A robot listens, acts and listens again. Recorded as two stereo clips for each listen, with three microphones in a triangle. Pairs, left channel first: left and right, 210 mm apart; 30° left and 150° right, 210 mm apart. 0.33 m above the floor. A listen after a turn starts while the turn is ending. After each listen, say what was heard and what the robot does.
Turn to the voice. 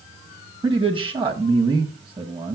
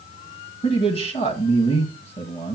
The man speaking: 30° right. Turn 30° right.
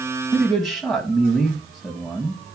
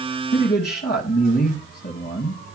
Facing the man speaking.